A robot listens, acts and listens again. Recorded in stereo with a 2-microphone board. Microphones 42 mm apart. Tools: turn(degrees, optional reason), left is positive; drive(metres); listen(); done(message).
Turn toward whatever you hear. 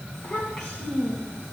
turn(degrees=15, reason="The child speaking: about 15° left or 165° left.")
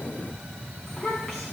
done("Found it: a child speaking, straight ahead, 2 to 4 m away.")